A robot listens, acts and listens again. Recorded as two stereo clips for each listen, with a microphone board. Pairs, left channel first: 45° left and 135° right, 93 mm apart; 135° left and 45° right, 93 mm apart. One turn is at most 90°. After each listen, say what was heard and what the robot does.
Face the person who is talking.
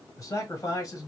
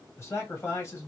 The man speaking: 80° left. Turn 80° left.
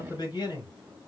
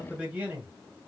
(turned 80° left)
The man speaking is now 25° left. Turn 25° left.
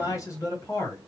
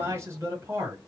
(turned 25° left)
Facing the man speaking.